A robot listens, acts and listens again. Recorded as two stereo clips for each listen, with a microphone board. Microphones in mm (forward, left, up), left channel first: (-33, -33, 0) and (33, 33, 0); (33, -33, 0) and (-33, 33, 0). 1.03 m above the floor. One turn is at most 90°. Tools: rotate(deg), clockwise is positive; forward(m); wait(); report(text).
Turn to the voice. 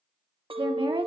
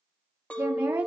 rotate(-65)
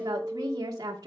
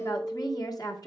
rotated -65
report("Facing the woman speaking.")